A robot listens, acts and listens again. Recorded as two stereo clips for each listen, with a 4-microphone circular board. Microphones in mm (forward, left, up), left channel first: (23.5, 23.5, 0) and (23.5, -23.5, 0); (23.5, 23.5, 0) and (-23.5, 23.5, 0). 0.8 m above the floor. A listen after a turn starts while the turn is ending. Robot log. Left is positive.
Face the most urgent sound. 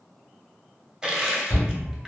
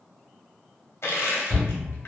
note: The shout: 125° left.
cmd yaw +125
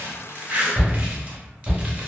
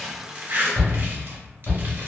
note: The shout is now 10° right.
cmd yaw -10
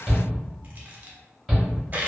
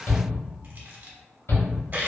end: Found it: a shout, straight ahead, 1 to 2 m away.